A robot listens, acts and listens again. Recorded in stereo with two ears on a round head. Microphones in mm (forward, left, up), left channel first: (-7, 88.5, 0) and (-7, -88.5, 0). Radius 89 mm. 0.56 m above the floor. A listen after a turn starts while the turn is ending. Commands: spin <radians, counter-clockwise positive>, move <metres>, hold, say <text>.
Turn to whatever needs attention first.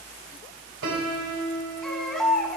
spin 0.52
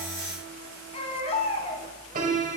spin 2.53
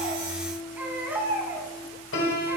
spin -0.17
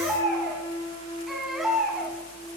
say Found it: a baby crying, straight ahead.